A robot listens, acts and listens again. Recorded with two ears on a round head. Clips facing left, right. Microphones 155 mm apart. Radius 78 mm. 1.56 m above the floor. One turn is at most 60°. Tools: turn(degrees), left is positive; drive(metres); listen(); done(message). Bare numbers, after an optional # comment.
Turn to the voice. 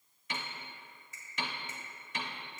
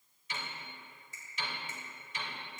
listen()
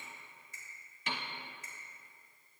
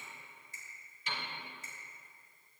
listen()
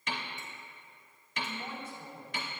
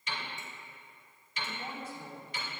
turn(-30)
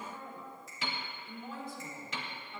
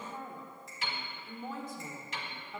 # So it is at 140° right.
turn(-60)
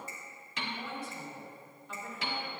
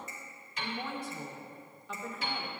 # The woman speaking is now 110° right.
turn(-60)
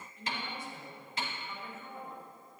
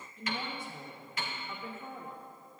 # The woman speaking is now 70° right.
turn(-60)
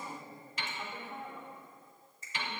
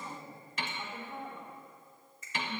done("Found it: a woman speaking, straight ahead, 1 to 2 m away.")